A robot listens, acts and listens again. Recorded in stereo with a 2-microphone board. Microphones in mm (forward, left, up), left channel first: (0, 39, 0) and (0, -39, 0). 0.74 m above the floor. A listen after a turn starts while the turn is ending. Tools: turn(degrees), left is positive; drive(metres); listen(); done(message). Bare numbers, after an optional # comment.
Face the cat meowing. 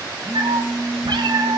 turn(-90)
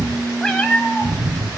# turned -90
# So it is at 20° left.
turn(20)
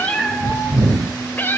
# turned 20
# The cat meowing is now 30° left.
turn(30)
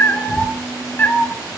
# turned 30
# The cat meowing is now 30° left.
turn(30)
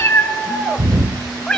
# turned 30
# The cat meowing is now 10° left.
turn(10)
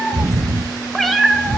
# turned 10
done("Found it: a cat meowing, straight ahead.")